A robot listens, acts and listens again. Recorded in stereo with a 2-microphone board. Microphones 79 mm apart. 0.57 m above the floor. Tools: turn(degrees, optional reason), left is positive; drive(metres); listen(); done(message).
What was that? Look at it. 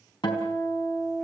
turn(degrees=90)
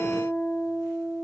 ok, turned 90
done("Facing the guitar.")